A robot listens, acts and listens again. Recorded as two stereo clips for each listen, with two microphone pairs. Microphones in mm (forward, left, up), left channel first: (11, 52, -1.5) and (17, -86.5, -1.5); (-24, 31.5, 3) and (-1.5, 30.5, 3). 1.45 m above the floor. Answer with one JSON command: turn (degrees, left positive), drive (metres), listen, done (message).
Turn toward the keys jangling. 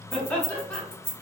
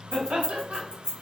{"turn": -45}
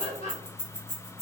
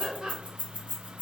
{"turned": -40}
{"done": "Facing the keys jangling, 1 to 2 m away."}